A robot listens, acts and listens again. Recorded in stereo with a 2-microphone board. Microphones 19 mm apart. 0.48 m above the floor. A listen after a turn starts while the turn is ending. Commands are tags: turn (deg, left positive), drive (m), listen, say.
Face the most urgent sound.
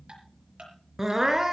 <turn deg="-25"/>
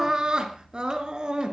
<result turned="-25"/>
<turn deg="-125"/>
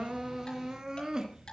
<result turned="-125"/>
<turn deg="-40"/>
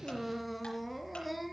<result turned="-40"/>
<say>Facing the crying.</say>